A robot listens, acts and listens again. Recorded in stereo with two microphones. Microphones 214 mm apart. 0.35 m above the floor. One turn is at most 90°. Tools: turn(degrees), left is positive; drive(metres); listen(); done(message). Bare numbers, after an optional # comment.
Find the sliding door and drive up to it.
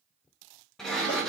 turn(30)
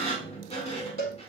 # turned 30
# So it is at 150° left.
turn(90)
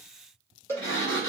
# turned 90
# The sliding door is now 90° left.
turn(90)
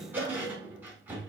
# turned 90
# The sliding door is now 10° right.
turn(-10)
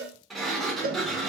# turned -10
drive(1.0)
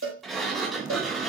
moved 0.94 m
drive(1.0)
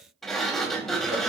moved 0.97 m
drive(1.0)
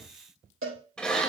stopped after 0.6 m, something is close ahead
done("Arrived at the sliding door, straight ahead.")